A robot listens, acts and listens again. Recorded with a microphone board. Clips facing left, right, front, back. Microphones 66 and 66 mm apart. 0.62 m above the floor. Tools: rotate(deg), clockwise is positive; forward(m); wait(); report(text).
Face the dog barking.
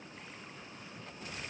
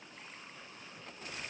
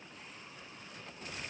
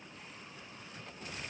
wait()
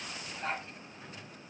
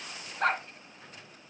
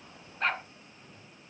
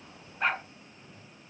rotate(100)
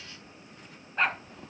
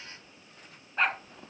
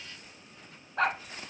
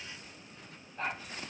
report("Found it: a dog barking, straight ahead.")